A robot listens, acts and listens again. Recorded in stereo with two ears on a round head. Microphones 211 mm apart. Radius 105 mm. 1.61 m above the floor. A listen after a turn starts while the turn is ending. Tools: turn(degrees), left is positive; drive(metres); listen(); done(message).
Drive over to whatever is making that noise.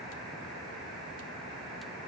listen()
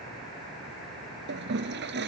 turn(degrees=-50)
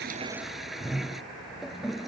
drive(metres=1.0)
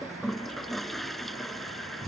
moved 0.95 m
drive(metres=1.0)
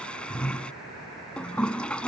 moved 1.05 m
drive(metres=1.0)
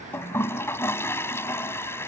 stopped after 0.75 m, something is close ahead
turn(degrees=20)
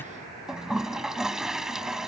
done("Arrived at the toilet flushing, straight ahead.")